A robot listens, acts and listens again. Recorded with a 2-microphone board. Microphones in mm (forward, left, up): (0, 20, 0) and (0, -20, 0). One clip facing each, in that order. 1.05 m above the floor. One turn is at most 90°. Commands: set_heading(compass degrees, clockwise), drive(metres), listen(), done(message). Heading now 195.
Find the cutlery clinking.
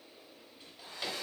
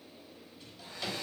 listen()
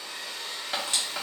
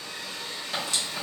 set_heading(160)
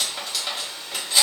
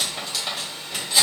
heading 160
done("Found it: cutlery clinking, straight ahead, 1 to 2 m away.")